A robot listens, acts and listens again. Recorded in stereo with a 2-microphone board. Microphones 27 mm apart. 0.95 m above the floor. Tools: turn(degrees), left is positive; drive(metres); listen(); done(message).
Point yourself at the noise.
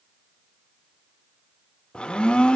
turn(degrees=40)
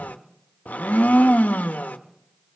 turn(degrees=100)
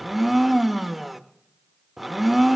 done("Found it: a blender, straight ahead.")